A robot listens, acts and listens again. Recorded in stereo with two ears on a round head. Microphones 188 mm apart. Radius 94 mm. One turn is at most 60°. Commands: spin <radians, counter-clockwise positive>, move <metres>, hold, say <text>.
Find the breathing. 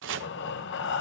spin 0.96
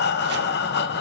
spin 1.05
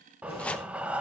say Facing the breathing, under 1 m away.